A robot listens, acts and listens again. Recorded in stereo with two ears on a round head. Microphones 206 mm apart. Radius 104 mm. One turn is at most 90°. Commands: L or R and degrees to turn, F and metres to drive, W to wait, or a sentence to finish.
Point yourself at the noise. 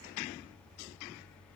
W
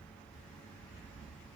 W
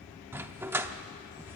R30
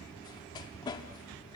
L20
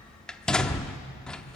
Found it: a dog barking, straight ahead.